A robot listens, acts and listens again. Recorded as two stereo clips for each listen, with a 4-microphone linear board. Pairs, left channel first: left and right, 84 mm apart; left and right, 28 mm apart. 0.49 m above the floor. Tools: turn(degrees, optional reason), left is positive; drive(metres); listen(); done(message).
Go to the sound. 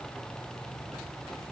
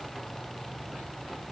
listen()
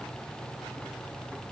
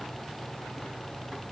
listen()
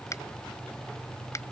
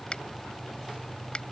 turn(degrees=40, reason="The finger snap: about 40° left or 140° left.")
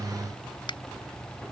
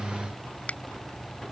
turn(degrees=100, reason="So it is at 100° left.")
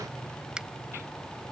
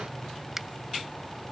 turn(degrees=-10, reason="The finger snap is now 10° right.")
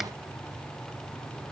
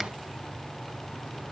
listen()
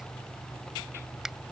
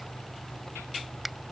drive(metres=1.0)
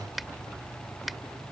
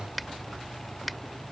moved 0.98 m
drive(metres=1.0)
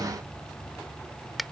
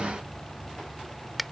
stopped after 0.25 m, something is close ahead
done("Arrived at the finger snap, straight ahead.")